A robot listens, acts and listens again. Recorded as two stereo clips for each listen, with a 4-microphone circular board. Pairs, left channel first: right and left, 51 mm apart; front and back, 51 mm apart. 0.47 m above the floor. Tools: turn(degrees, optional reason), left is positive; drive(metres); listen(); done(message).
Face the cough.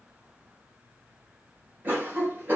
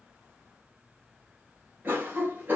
turn(degrees=135, reason="The cough: 135° left.")
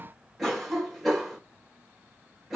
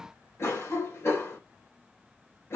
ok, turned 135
done("Facing the cough, 1 to 2 m away.")